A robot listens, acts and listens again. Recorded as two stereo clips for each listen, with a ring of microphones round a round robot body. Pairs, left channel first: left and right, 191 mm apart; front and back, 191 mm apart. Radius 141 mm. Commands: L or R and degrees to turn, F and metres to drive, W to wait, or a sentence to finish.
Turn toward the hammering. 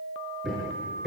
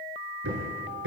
L180
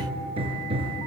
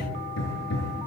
R30
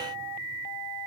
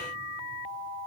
W
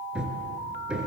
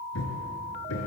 Facing the hammering, over 4 m away.